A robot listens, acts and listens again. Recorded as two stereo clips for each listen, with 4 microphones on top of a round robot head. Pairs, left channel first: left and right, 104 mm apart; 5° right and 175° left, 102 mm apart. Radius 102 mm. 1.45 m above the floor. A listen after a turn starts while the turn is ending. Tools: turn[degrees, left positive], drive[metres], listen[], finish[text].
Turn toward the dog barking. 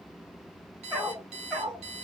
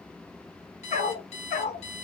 Action: finish[Facing the dog barking.]